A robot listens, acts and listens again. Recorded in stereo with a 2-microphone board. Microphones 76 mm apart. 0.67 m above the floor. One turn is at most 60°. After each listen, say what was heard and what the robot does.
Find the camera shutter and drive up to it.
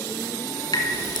Keep listening.
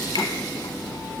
Keep listening.
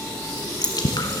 I can't make out a camera shutter, only dripping.